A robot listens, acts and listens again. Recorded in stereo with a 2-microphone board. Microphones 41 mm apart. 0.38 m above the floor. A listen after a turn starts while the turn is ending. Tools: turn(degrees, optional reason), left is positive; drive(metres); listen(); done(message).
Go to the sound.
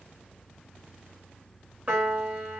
turn(degrees=-30, reason="The piano: about 30° right or 150° right.")
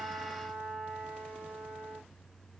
drive(metres=1.0)
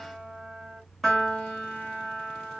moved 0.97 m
drive(metres=1.0)
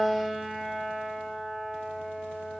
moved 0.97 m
drive(metres=1.0)
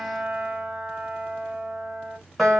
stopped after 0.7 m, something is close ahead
done("I am next to the piano.")